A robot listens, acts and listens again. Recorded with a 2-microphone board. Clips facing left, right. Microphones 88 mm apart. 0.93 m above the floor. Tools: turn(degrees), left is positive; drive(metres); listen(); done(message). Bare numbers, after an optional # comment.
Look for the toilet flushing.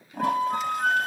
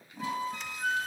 # The toilet flushing: about 65° left or 115° left.
turn(65)
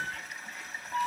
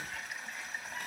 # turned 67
done("Facing the toilet flushing, 2 to 4 m away.")